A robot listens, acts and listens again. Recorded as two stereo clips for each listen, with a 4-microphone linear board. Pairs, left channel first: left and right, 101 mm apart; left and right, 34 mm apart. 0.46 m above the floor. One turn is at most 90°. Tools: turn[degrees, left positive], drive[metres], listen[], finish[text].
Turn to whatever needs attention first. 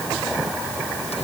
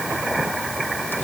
Action: listen[]
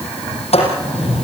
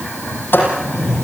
Action: listen[]
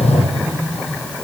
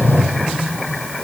Action: finish[I can't make out anything urgent to turn to.]